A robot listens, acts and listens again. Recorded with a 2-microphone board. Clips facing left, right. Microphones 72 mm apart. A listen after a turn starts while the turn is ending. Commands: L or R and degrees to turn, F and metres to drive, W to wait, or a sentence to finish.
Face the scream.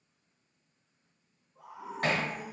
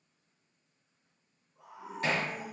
L40
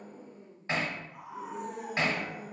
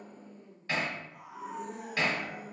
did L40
L90
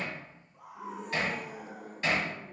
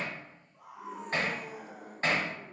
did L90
L25
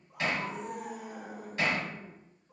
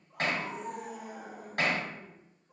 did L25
Found it: a scream, straight ahead.